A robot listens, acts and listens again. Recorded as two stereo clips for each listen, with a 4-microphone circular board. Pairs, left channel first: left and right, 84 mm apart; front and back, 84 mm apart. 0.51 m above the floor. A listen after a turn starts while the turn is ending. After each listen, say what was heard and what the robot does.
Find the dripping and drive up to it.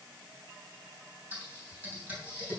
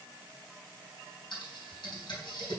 Keep listening.
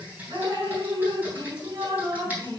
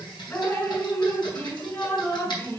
The dripping: 60° right. Turn 60° right.
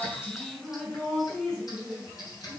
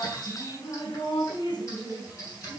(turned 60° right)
The dripping is now 10° left. Turn 10° left.
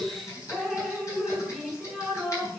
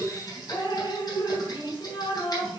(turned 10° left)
Drive 1.0 m forward.
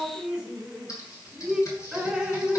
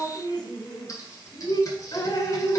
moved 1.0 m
Drive 1.0 m forward.
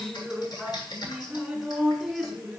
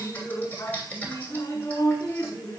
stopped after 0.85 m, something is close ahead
I am next to the dripping.